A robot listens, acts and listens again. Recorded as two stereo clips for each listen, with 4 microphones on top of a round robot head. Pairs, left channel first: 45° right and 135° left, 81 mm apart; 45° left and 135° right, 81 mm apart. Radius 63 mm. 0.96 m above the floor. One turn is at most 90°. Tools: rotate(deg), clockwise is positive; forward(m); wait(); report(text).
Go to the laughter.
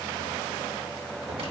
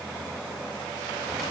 wait()
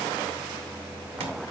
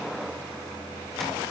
wait()
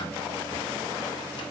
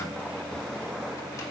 report("I can't make out laughter.")